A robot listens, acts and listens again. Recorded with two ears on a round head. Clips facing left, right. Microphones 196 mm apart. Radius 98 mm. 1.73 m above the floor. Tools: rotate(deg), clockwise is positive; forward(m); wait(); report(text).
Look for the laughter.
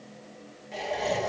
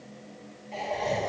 rotate(-30)
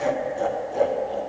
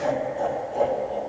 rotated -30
rotate(-15)
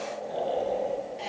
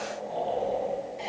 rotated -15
rotate(-30)
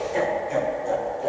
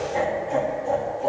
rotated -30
rotate(-15)
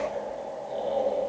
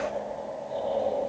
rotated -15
rotate(-150)
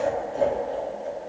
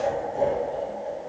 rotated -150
report("Facing the laughter.")